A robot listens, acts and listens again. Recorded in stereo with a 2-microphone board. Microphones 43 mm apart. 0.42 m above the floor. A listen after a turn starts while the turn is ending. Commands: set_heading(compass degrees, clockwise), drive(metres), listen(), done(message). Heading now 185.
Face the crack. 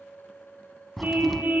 set_heading(155)
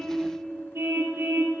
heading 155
listen()
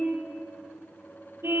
done("I heard a crack, but can't make it out now. It was about 30° right or 150° left.")